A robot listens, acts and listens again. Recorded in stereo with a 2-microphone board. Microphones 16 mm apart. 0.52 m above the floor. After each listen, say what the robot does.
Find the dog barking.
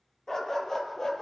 Turn 35° left.
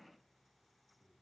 Keep listening.
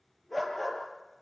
Turn 10° left.
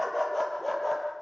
Turn 10° left.
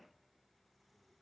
Keep listening.
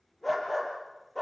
Turn 10° left.
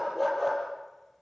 Facing the dog barking.